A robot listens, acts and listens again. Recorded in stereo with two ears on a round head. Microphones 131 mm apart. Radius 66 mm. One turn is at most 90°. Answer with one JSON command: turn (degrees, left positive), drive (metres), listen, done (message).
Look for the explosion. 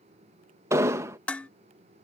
{"turn": -20}
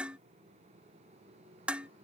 {"listen": true}
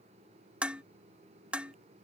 {"done": "I heard an explosion, but can't make it out now. It was about straight ahead or 140° right."}